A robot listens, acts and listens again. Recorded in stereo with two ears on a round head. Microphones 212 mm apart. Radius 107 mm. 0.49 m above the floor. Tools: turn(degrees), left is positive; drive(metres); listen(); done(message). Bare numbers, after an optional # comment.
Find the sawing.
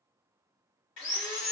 turn(90)
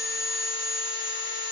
done("Facing the sawing.")